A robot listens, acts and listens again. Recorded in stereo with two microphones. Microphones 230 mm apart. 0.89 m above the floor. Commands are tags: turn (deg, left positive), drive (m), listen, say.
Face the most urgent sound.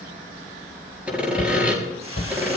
<turn deg="45"/>
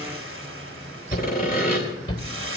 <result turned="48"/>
<turn deg="85"/>
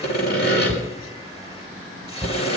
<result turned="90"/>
<say>Found it: a shout, straight ahead, 2 to 4 m away.</say>